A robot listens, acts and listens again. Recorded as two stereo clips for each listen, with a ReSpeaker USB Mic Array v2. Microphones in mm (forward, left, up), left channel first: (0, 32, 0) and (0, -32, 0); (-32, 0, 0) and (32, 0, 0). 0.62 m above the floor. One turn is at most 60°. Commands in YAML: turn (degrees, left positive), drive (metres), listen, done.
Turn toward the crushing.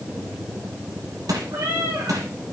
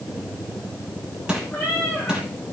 turn: -60
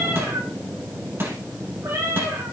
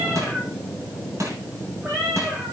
turn: -40
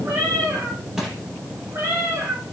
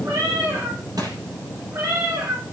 done: "Facing the crushing."